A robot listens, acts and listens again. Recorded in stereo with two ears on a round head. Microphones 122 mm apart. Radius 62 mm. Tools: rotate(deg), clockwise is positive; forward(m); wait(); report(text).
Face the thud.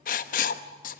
wait()
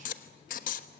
wait()
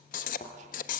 rotate(-50)
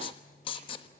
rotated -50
wait()
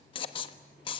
report("I heard a thud, but can't make it out now. It was about straight ahead or 80° left.")